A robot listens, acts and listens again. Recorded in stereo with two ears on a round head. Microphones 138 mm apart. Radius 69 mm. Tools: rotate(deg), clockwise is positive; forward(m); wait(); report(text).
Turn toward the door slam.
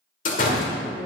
rotate(-55)
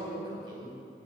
wait()
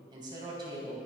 report("I heard a door slam, but can't make it out now. It was about straight ahead or 70° left.")